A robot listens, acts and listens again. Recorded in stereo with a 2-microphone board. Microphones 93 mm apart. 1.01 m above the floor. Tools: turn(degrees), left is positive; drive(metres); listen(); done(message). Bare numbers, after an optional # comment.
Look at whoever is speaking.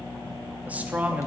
# The man speaking: about 15° right or 165° right.
turn(-15)
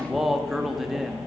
done("Found it: a man speaking, straight ahead.")